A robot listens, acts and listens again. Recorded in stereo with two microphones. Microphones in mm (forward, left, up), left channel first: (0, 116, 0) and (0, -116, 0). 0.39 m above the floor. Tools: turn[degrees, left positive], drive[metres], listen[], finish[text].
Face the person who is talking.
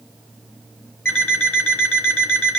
Action: listen[]
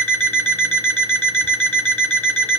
Action: listen[]
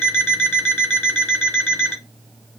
Action: finish[I can't make out anyone speaking, only an alarm clock.]